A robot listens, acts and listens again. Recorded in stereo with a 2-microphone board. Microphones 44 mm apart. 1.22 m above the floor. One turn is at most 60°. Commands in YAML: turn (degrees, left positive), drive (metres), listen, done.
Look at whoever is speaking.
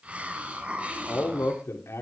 turn: 60
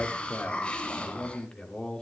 turn: 20
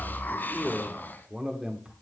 turn: -20
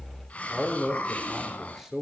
done: "Found it: a man speaking, straight ahead."